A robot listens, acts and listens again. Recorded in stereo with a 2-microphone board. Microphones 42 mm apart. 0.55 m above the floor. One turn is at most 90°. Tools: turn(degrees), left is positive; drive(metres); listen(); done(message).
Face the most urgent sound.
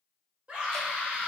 turn(degrees=-35)
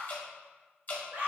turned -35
turn(degrees=-90)
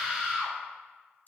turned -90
turn(degrees=-15)
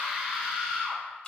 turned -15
done("Found it: a scream, straight ahead.")